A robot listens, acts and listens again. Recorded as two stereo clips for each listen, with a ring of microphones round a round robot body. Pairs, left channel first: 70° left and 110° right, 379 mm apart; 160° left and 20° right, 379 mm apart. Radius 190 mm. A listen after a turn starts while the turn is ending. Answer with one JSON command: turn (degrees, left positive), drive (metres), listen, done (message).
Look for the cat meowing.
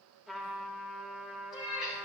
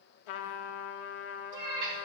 {"turn": -25}
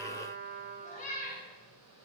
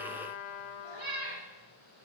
{"done": "Facing the cat meowing, 2 to 4 m away."}